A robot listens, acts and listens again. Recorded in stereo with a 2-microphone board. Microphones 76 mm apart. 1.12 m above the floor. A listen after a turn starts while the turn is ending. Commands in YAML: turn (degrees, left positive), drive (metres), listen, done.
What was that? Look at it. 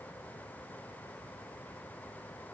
listen: true
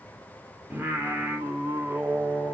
turn: -25
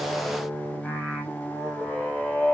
done: "Facing the singing."